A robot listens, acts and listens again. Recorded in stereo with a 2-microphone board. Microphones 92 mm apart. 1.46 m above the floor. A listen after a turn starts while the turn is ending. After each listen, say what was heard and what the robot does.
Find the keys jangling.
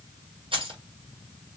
The keys jangling: about 70° right or 110° right. Turn 70° right.
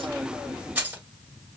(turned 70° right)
So it is at 20° right. Turn 20° right.
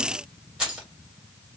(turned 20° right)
The keys jangling is now 10° right. Turn 10° right.
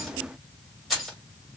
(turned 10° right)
Found it: keys jangling, straight ahead.